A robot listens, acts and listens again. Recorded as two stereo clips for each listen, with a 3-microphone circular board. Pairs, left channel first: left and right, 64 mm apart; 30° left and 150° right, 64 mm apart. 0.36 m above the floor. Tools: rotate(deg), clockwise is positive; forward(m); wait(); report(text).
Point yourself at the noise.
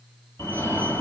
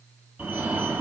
rotate(-135)
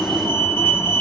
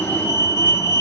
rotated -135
rotate(-45)
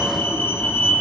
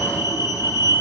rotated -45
rotate(-25)
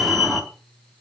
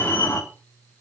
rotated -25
report("Found it: a fire alarm, straight ahead, over 4 m away.")